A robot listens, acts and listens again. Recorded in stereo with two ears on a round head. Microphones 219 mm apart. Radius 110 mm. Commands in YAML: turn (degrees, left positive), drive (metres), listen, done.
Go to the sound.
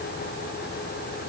listen: true
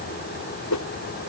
turn: 90
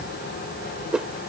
drive: 1.0
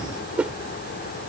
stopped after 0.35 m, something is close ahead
done: "Something is in my way. I am facing the whoosh but have not reached it."